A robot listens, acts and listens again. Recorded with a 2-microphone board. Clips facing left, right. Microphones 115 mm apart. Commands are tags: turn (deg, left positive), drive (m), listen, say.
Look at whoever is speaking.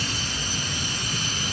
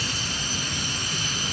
<listen/>
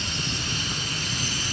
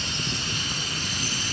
<listen/>
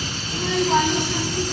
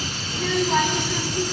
<turn deg="30"/>
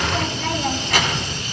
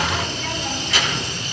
<turn deg="120"/>
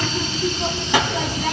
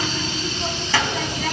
<turn deg="20"/>
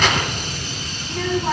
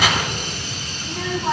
<say>Found it: a child speaking, straight ahead, 2 to 4 m away.</say>